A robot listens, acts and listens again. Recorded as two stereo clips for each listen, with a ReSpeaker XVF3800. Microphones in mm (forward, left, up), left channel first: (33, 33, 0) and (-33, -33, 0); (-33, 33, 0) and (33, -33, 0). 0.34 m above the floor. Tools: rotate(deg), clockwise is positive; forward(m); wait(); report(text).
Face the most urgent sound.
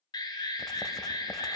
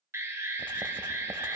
rotate(-10)
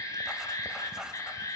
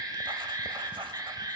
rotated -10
report("Facing the alarm.")